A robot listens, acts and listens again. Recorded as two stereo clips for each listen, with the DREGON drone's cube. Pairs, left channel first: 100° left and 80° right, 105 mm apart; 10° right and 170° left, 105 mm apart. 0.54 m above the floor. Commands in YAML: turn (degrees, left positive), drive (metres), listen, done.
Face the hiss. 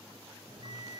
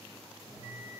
listen: true
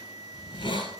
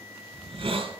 turn: 135
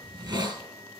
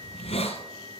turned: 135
turn: -30
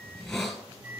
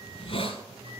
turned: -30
turn: 15
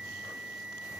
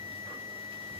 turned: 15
listen: true
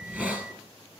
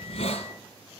done: "Facing the hiss."